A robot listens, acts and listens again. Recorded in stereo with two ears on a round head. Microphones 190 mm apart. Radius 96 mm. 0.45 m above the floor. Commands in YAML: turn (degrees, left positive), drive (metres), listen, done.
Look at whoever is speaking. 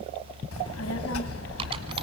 turn: 75
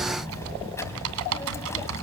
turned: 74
turn: 15
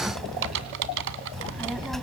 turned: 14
done: "Facing the child speaking."